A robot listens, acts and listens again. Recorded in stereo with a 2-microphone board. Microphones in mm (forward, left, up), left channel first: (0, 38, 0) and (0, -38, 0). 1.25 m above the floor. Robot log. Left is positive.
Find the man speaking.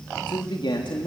cmd yaw +90
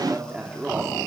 note: So it is at 15° right.
cmd yaw -15
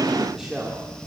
end: Facing the man speaking, 2 to 4 m away.